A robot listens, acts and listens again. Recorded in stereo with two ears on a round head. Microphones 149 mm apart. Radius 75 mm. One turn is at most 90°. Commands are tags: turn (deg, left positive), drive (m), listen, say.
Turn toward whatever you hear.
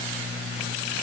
<listen/>
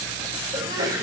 <turn deg="-25"/>
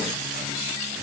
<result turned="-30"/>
<listen/>
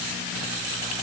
<say>I heard a sneeze, but can't make it out now. It was about 5° left or 125° right.</say>